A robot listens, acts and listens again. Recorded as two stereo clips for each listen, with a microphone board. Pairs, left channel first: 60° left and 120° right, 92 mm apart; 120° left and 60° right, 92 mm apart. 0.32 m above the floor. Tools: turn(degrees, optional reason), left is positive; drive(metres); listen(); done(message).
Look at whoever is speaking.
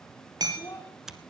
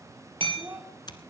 done("Facing the child speaking.")